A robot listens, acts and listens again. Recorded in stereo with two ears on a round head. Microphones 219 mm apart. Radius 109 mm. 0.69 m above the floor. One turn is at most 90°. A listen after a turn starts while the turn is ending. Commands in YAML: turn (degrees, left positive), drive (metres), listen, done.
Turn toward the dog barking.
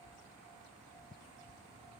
listen: true
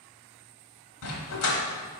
turn: 75
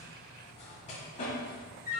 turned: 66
turn: 35
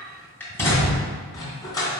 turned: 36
turn: 15
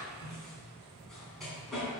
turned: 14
done: "Found it: a dog barking, straight ahead."